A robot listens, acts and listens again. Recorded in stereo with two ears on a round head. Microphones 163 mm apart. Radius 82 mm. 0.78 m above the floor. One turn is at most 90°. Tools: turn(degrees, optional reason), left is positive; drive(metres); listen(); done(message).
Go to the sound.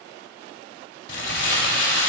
turn(degrees=70, reason="The crumpling: about 70° left or 110° left.")
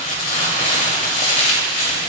turn(degrees=40, reason="So it is at 40° left.")
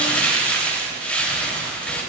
turn(degrees=10, reason="The crumpling is now 10° left.")
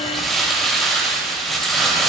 drive(metres=1.0)
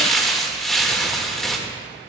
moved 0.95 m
drive(metres=1.0)
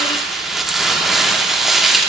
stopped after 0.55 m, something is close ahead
done("Arrived at the crumpling, straight ahead.")